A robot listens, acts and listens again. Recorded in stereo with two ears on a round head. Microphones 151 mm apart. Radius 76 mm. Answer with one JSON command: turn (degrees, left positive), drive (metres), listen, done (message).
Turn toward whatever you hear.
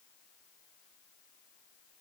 {"listen": true}
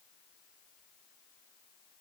{"listen": true}
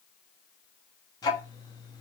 {"turn": 25}
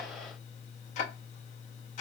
{"turn": 130}
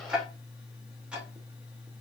{"turn": -10}
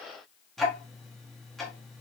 {"done": "Facing the ticking, under 1 m away."}